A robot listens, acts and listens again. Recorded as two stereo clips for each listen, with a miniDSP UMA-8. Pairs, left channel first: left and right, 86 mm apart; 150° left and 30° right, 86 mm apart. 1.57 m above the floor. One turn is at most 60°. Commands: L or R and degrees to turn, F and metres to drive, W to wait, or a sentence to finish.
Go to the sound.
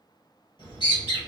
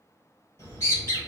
L60
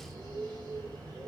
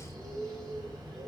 L10
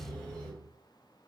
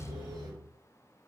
F1.0
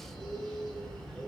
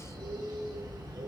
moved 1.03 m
F1.0
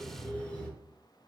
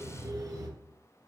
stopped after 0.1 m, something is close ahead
L15
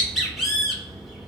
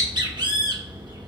Arrived at the bird, straight ahead.